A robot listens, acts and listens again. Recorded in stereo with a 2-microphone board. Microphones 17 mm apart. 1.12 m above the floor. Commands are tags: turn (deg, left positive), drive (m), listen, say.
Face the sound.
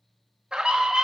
<turn deg="-55"/>
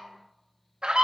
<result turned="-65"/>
<turn deg="-60"/>
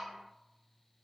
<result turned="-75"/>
<turn deg="15"/>
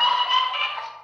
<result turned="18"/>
<say>Found it: a scream, straight ahead, 1 to 2 m away.</say>